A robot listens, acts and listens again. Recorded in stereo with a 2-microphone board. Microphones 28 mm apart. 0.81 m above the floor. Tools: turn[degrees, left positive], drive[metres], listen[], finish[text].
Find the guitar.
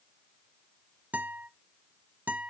Action: turn[-90]
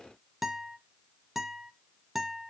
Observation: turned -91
Thought: So it is at 10° right.
Action: turn[-10]
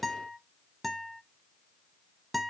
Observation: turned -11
Action: finish[Facing the guitar, 1 to 2 m away.]